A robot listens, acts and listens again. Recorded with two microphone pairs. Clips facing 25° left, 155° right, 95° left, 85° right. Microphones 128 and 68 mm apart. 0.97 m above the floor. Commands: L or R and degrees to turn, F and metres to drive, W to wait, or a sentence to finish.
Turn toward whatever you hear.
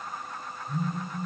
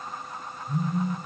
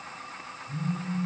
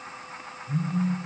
R115
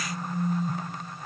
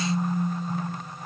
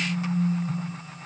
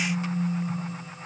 L20
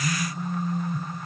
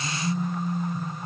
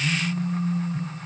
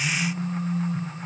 Facing the phone buzzing, 2 to 4 m away.